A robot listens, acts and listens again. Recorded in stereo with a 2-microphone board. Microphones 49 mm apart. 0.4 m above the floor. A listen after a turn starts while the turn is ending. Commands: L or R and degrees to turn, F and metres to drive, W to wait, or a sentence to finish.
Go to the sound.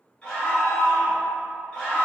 L25
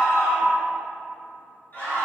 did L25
L130
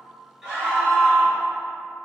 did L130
R25
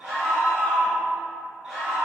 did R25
F1.0
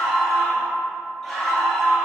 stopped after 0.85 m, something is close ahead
I am next to the scream.